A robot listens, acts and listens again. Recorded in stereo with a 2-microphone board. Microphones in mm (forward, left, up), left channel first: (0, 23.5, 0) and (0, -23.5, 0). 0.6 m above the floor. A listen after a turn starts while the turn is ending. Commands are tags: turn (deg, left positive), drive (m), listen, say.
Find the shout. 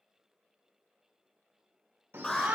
<turn deg="-60"/>
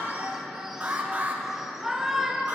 <turn deg="-10"/>
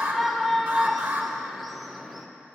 <say>Facing the shout.</say>